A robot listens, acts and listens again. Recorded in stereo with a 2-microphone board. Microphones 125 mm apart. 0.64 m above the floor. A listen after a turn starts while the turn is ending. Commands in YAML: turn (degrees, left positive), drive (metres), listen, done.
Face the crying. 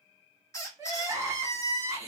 turn: -25
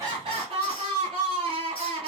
turn: -130
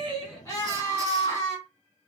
turn: 30
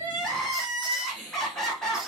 done: "Found it: crying, straight ahead."